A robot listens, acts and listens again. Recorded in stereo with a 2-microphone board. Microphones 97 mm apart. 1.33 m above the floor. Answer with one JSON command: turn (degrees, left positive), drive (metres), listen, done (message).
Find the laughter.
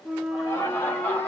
{"turn": 20}
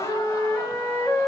{"listen": true}
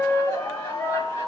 {"turn": 30}
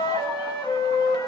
{"listen": true}
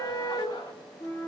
{"listen": true}
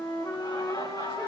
{"turn": 130}
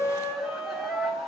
{"done": "Facing the laughter, over 4 m away."}